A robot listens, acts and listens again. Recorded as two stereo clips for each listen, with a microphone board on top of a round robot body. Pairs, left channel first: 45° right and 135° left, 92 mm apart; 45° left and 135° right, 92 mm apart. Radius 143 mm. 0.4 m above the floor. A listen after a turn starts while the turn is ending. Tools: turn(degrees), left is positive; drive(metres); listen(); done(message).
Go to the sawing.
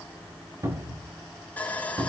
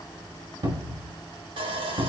turn(degrees=-115)
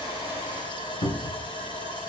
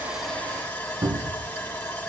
turn(degrees=-20)
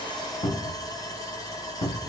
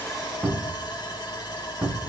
drive(metres=1.0)
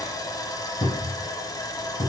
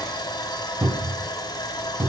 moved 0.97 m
drive(metres=1.0)
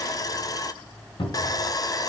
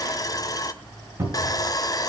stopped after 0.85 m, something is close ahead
done("I am next to the sawing.")